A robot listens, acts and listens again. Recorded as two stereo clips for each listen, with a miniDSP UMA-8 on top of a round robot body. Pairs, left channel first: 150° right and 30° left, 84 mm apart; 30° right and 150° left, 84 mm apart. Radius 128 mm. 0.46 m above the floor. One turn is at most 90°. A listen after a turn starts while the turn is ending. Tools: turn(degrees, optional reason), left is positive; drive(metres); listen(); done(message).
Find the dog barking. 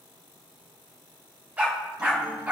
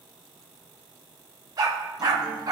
turn(degrees=90, reason="The dog barking: 105° left.")
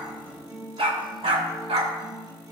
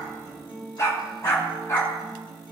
turn(degrees=25, reason="The dog barking is now 25° left.")
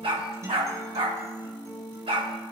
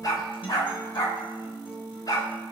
turn(degrees=15, reason="The dog barking is now 15° left.")
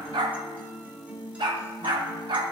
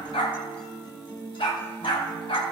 done("Facing the dog barking.")